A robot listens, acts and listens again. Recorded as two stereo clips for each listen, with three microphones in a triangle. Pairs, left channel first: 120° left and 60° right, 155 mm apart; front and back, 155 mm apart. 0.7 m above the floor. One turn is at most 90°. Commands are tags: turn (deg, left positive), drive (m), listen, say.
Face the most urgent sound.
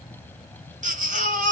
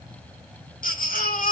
<turn deg="-25"/>
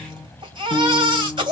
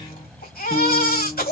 <say>Found it: a baby crying, straight ahead, 2 to 4 m away.</say>